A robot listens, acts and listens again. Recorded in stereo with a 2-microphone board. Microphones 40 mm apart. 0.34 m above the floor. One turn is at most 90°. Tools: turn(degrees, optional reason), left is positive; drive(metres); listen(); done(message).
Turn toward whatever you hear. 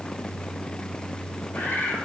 turn(degrees=55, reason="The bird: about 55° left or 125° left.")
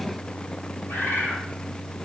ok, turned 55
turn(degrees=70, reason="So it is at 70° left.")
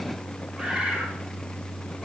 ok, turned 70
listen()
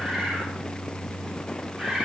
turn(degrees=-20, reason="The bird is now 20° right.")
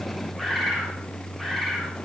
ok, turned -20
done("Found it: a bird, straight ahead.")